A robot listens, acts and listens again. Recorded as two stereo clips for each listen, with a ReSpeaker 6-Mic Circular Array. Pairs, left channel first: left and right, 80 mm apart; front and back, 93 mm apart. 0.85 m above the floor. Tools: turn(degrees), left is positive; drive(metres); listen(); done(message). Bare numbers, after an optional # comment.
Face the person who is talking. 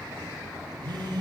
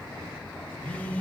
listen()
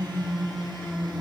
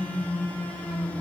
listen()
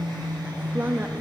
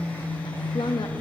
# The woman speaking: 25° right.
turn(-25)
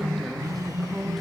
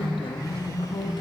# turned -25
done("Facing the woman speaking.")